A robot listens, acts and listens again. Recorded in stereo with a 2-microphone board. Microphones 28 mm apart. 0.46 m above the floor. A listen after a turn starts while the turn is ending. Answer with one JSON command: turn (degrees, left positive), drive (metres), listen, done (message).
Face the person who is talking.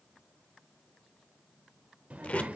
{"turn": -60}
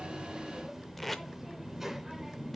{"turn": -15}
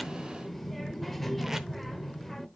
{"done": "Found it: a child speaking, straight ahead, under 1 m away."}